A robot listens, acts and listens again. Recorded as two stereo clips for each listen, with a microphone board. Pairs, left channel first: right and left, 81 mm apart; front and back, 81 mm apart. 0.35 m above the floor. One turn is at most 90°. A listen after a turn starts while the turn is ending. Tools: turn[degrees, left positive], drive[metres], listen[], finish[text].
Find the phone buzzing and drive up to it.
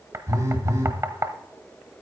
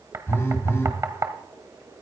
Thought: The phone buzzing: 55° left.
Action: turn[55]
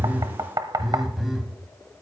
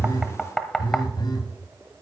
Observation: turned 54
Action: drive[1.0]
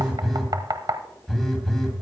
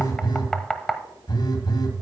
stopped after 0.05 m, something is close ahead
Action: finish[Something is in my way. I am facing the phone buzzing but have not reached it.]